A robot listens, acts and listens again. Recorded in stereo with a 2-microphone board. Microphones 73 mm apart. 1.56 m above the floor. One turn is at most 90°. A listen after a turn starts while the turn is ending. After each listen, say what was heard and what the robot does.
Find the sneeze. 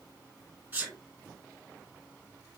The sneeze: about 30° right or 150° right. Turn 30° right.
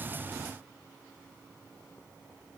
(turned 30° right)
Keep listening.
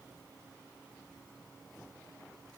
I heard a sneeze, but can't make it out now. It was about straight ahead or 120° right.